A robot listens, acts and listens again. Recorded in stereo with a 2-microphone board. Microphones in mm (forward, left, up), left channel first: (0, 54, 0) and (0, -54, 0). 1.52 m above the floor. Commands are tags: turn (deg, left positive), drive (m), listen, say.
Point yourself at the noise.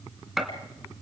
<turn deg="30"/>
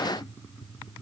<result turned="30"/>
<listen/>
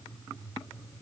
<say>I heard a gunshot, but can't make it out now. It was about 30° right or 150° left.</say>